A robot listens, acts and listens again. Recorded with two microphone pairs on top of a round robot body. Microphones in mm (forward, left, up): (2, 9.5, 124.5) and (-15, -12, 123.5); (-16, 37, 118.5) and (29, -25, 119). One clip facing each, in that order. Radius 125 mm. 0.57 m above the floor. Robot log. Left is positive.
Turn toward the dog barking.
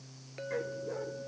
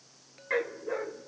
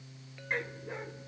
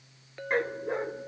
note: The dog barking: 100° right.
cmd yaw -100
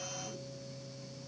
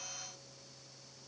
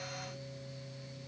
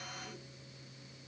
cmd idle
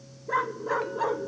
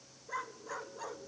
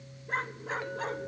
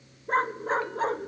end: Found it: a dog barking, straight ahead.